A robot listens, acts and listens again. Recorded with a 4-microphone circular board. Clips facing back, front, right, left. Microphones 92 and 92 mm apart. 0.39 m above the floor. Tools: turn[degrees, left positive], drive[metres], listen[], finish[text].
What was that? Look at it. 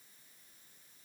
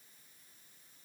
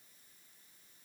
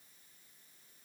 Action: listen[]
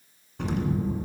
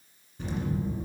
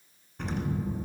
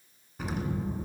Thought: The explosion: 175° left.
Action: turn[175]
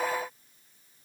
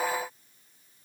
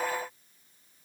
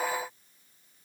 Action: finish[I heard an explosion from this way, but can't make it out now.]